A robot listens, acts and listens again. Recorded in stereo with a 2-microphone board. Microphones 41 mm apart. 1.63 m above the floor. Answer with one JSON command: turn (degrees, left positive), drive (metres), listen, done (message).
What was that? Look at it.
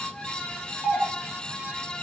{"turn": 25}
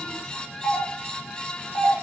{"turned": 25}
{"turn": 130}
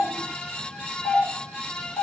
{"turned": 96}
{"turn": 35}
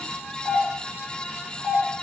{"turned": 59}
{"turn": -25}
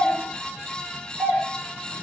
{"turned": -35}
{"turn": 10}
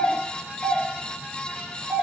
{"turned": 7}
{"done": "Found it: a doorbell, straight ahead."}